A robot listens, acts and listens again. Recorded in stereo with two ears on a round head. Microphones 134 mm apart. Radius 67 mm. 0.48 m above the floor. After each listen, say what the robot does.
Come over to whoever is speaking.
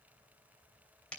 Keep listening.
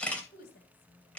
Turn 70° left.
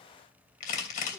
Keep listening.
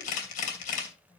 Keep listening.
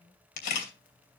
I heard a woman speaking, but can't make it out now. It was about straight ahead or 40° left. I did not reach it.